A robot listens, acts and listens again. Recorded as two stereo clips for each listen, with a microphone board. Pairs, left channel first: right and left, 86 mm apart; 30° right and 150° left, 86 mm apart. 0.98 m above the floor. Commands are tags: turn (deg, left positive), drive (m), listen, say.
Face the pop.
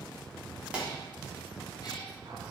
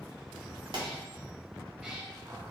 <turn deg="165"/>
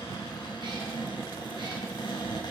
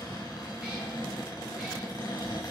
<say>Facing where the pop came from. I can't hear it now.</say>